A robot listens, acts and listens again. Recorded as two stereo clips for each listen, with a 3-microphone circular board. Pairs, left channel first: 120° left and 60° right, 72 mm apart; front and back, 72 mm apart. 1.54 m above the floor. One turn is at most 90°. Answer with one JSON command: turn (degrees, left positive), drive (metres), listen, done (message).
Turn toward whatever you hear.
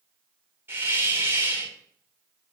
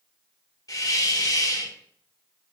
{"done": "Facing the hiss, 2 to 4 m away."}